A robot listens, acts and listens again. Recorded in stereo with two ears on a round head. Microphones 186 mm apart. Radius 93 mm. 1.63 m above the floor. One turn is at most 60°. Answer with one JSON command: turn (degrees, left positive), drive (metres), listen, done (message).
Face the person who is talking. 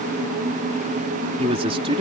{"turn": -25}
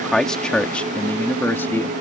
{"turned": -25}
{"turn": 10}
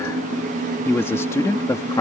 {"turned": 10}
{"turn": 20}
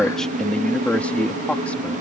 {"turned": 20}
{"done": "Facing the man speaking."}